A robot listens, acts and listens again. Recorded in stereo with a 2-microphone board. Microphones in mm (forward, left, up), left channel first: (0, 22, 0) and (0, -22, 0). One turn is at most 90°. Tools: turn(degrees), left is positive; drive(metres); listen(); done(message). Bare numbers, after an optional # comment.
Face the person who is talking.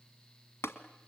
listen()
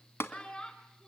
# The child speaking: about 20° left or 160° left.
turn(20)
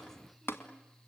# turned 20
listen()
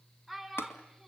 done("Facing the child speaking, 2 to 4 m away.")